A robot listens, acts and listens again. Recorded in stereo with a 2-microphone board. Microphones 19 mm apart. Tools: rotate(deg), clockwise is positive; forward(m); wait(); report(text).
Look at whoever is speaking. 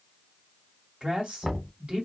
rotate(55)
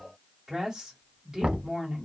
rotate(35)
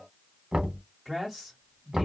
rotate(10)
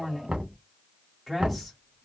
report("Facing the woman speaking, 1 to 2 m away.")